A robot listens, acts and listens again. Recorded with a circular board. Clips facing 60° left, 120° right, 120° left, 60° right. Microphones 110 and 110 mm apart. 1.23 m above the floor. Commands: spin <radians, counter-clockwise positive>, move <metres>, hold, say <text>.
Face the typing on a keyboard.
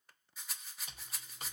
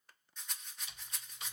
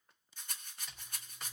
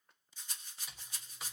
spin 0.44
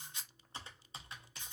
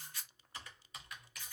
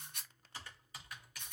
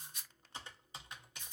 say Facing the typing on a keyboard, under 1 m away.